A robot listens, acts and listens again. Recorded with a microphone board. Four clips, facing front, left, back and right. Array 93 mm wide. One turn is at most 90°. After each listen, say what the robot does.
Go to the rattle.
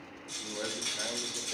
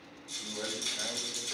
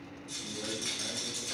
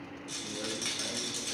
Turn 90° right.
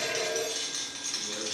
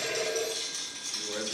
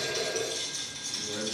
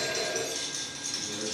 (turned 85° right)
Turn 10° right.
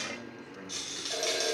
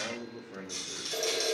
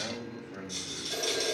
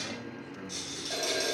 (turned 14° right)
Drive 1.0 m forward.
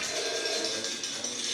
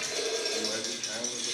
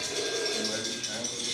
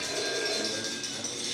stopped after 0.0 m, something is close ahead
Turn 10° left.
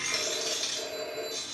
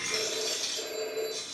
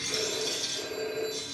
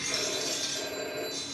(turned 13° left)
Something is in my way. I am facing the rattle but have not reached it.